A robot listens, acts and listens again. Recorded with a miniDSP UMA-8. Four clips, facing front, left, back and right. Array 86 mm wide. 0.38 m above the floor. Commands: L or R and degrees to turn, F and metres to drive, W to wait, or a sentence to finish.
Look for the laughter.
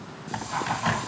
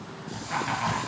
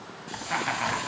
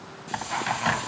L180
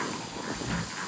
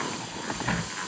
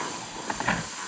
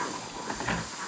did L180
W
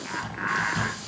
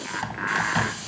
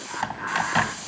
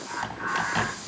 L60
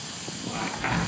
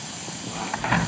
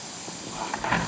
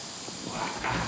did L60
W
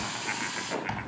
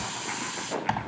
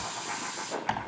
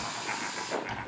W
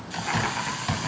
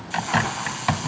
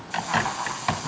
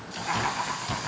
R10
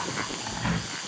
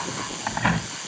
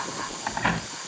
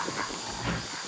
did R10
W
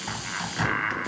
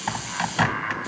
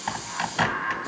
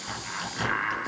Facing the laughter, over 4 m away.